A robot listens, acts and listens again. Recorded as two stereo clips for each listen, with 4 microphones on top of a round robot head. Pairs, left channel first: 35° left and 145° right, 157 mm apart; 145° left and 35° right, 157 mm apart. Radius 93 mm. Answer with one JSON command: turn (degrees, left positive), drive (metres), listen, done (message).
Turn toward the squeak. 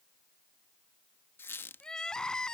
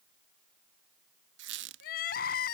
{"turn": -45}
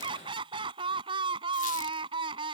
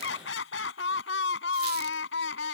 {"listen": true}
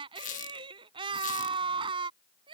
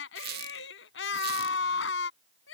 {"turn": -10}
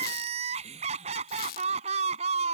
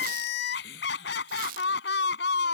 {"done": "Found it: a squeak, straight ahead."}